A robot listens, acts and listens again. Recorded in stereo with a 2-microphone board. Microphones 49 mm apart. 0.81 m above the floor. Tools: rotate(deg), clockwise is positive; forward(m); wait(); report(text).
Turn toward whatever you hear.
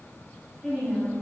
rotate(-30)
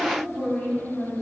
rotate(-145)
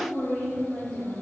rotate(-20)
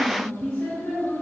report("Found it: a woman speaking, straight ahead, 2 to 4 m away.")